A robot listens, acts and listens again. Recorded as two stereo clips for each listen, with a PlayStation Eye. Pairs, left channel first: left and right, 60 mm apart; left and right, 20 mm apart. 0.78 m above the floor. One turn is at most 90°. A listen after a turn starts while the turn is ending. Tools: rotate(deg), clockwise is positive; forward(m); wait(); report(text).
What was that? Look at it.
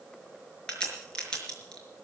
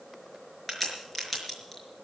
rotate(-15)
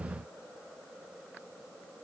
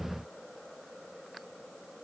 wait()
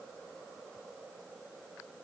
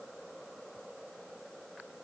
report("I heard a crack, but can't make it out now. It was about straight ahead or 150° left.")